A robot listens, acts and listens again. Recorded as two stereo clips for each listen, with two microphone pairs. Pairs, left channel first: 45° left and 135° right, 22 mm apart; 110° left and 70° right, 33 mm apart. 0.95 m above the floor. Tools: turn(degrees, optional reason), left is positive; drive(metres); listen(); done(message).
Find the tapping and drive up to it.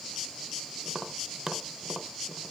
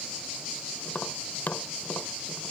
turn(degrees=150, reason="The tapping: 150° left.")
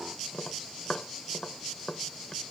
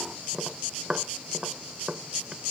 drive(metres=1.0)
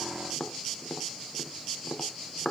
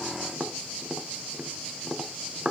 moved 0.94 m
drive(metres=1.0)
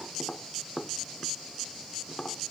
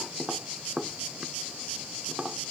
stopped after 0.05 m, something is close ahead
done("Something is in my way. I am facing the tapping but have not reached it.")